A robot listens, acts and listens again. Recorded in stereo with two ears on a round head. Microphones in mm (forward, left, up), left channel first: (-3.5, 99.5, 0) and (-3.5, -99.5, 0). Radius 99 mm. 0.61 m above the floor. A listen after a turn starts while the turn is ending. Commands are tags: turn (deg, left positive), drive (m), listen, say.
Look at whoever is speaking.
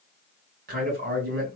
<turn deg="-45"/>
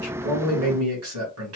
<turn deg="-85"/>
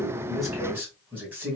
<turn deg="-10"/>
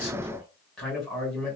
<say>Facing the man speaking.</say>